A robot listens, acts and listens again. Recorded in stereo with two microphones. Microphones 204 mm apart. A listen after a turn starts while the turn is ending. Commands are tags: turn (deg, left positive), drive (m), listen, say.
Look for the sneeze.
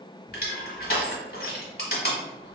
<listen/>
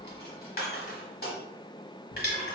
<listen/>
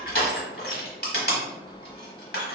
<say>I can't make out a sneeze, only crushing.</say>